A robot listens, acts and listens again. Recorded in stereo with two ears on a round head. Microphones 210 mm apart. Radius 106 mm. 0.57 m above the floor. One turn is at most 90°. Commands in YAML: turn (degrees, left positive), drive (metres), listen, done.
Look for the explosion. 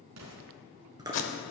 turn: -75
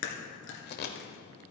listen: true
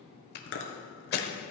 done: "I heard an explosion, but can't make it out now. It was about straight ahead or 30° right."